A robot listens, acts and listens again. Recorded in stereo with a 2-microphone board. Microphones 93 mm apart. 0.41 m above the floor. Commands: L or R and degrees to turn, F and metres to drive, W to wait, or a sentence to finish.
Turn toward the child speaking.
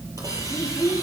L25
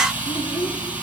L120
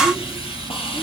W
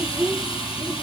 Found it: a child speaking, straight ahead, over 4 m away.